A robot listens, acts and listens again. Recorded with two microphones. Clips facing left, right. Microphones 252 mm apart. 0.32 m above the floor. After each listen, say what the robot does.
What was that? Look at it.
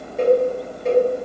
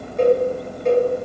Turn 30° left.
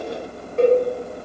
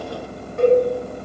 Turn 150° left.
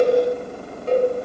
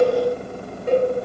Turn 15° right.
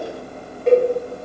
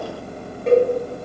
Facing the cowbell.